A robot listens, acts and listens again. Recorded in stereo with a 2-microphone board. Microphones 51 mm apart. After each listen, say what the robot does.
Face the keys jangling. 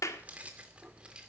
Turn 20° right.
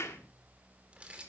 Turn 20° right.
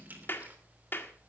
Keep listening.
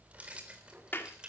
Turn 20° right.
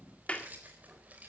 Keep listening.
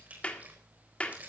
Turn 30° right.
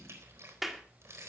Turn 125° right.
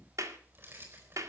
Turn 45° right.
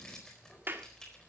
Turn 10° left.
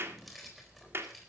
Facing the keys jangling.